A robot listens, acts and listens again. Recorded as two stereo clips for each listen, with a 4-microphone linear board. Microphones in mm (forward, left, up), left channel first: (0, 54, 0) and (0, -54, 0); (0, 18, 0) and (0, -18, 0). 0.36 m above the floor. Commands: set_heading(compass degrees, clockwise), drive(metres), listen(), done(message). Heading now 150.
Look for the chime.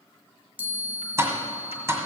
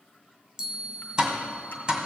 set_heading(165)
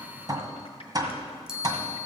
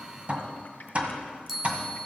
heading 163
done("Facing the chime.")